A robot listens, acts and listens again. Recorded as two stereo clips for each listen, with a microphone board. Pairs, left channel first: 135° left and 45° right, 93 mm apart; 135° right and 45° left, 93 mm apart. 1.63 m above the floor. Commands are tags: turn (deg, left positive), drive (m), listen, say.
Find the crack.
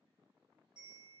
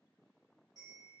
<listen/>
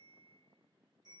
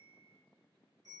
<listen/>
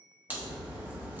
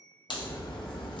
<turn deg="-110"/>
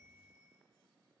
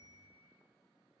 <say>I heard a crack from this way, but can't make it out now.</say>